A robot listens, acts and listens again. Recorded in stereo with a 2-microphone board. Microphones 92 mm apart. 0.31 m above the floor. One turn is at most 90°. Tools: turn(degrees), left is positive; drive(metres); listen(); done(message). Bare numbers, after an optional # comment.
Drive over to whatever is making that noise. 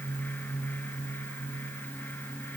listen()
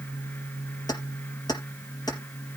# The keys jangling: about 45° left or 135° left.
turn(45)
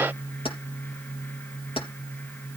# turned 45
# So it is at 85° left.
turn(85)
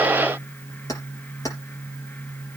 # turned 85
# The keys jangling is now 40° left.
turn(40)
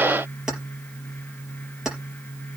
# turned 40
drive(1.0)
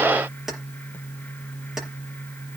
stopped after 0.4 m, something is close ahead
done("Something is in my way. I am facing the keys jangling but have not reached it.")